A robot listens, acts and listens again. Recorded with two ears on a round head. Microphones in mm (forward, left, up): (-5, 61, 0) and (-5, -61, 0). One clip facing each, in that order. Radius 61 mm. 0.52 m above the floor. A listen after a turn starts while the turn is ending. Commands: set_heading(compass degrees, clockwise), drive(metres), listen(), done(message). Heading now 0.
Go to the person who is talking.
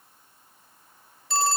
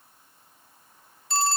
listen()
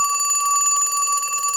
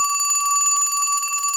listen()
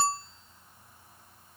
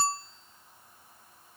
done("I can't make out anyone speaking, only a phone ringing.")